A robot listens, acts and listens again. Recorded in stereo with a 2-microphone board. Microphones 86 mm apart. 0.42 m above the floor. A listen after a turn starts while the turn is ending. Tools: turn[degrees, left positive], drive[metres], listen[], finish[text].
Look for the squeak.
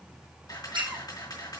Thought: The squeak: about 70° right or 110° right.
Action: turn[-70]
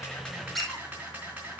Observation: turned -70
Action: finish[Facing the squeak.]